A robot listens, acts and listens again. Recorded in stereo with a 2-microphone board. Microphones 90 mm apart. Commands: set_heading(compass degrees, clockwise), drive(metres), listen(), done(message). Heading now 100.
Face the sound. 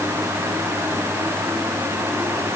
listen()
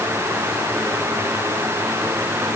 listen()
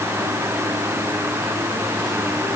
done("I can't make out anything to turn to.")